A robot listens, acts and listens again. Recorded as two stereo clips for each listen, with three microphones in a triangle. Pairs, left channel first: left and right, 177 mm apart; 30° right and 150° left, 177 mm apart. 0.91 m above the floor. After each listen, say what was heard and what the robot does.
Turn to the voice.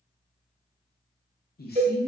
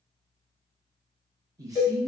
The man speaking: 85° left. Turn 85° left.
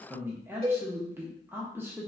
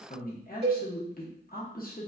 The man speaking is now 15° right. Turn 15° right.
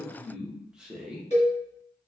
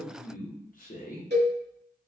Found it: a man speaking, straight ahead.